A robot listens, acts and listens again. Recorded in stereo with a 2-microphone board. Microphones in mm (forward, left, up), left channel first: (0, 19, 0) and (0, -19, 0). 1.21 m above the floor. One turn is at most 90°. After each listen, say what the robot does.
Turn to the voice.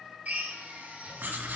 Keep listening.
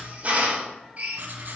Keep listening.
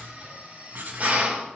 I can't make out anyone speaking to turn to.